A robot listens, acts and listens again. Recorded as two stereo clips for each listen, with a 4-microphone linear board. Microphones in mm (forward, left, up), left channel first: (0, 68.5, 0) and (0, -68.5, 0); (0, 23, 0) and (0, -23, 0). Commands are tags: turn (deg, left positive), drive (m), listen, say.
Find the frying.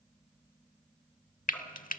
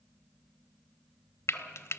<turn deg="90"/>
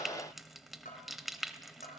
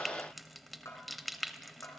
<say>Found it: frying, straight ahead.</say>